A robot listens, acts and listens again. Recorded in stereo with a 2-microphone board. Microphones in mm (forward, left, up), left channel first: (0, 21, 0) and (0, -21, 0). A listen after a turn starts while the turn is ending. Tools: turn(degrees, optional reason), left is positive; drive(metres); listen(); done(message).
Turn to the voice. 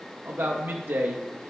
turn(degrees=-65, reason="The man speaking: about 65° right or 115° right.")
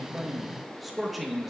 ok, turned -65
done("Found it: a man speaking, straight ahead, under 1 m away.")